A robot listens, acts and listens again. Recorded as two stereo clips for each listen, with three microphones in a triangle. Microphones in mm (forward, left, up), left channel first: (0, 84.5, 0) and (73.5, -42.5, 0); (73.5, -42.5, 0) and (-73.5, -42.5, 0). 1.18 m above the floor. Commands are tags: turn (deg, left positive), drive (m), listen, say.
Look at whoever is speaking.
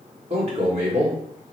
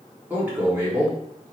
<turn deg="-105"/>
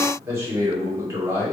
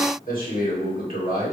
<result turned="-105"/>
<turn deg="10"/>
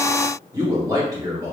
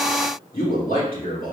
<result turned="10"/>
<say>Facing the man speaking.</say>